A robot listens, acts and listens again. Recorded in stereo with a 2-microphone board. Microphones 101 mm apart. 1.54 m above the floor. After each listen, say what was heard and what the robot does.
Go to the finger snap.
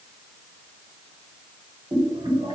Keep listening.
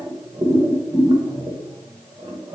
Keep listening.
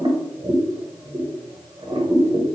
I can't make out a finger snap, only boiling.